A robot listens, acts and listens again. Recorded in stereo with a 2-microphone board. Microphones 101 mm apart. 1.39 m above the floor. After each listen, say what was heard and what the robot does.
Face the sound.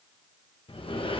The sliding door: about 60° left or 120° left. Turn 60° left.
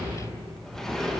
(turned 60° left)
Found it: a sliding door, straight ahead, 1 to 2 m away.